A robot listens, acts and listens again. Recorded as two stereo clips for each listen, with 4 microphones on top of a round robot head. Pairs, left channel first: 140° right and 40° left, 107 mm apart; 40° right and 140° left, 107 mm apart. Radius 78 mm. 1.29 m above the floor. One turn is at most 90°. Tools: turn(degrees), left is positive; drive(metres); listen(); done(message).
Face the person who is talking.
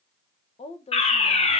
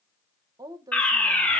turn(degrees=-90)
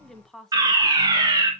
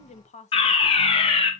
turn(degrees=-55)
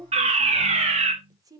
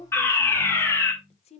turn(degrees=-15)
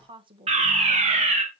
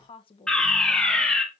done("Found it: a woman speaking, straight ahead, 1 to 2 m away.")